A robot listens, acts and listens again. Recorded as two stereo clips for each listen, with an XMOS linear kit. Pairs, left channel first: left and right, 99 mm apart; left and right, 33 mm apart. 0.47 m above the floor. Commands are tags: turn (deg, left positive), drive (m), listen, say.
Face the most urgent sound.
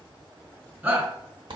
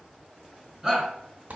<turn deg="-15"/>
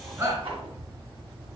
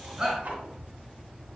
<turn deg="-150"/>
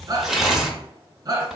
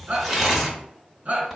<turn deg="-45"/>
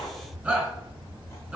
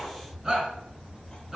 <turn deg="-10"/>
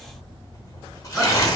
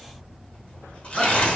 <listen/>
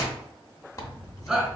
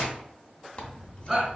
<say>Facing the shout, 2 to 4 m away.</say>